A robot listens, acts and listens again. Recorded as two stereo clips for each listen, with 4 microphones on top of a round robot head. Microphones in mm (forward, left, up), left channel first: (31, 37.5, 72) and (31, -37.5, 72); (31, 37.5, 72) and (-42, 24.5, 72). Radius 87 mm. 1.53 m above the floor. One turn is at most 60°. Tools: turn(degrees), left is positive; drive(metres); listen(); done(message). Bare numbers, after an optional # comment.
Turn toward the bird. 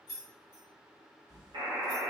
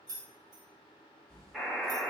# The bird: 50° right.
turn(-50)
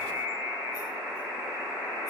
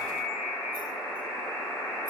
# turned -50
listen()
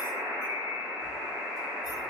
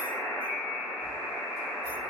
listen()
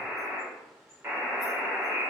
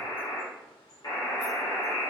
done("I heard a bird from this way, but can't make it out now.")